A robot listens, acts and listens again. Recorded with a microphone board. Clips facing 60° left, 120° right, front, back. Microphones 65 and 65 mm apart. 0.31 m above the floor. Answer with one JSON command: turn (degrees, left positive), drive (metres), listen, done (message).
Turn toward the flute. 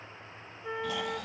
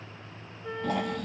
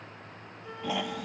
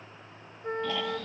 {"turn": 140}
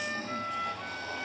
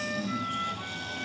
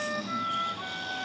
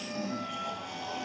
{"turn": -30}
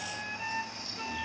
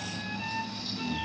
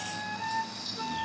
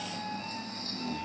{"turn": -15}
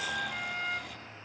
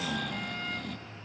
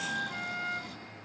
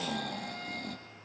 {"done": "Facing the flute, 1 to 2 m away."}